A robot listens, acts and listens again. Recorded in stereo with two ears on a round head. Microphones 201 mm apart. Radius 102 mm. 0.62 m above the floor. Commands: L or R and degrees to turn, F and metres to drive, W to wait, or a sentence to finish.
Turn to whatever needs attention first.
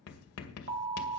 R55
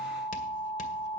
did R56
R70
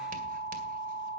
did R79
L10
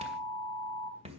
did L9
Found it: an alarm, straight ahead, 2 to 4 m away.